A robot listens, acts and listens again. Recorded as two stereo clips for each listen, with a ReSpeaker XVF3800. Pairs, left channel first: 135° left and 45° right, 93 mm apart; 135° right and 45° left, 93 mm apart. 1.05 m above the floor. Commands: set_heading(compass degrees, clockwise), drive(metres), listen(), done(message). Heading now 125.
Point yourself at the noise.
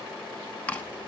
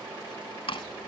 set_heading(275)
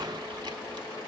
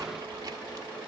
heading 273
listen()
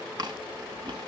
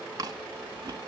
done("Found it: chewing, straight ahead, 1 to 2 m away.")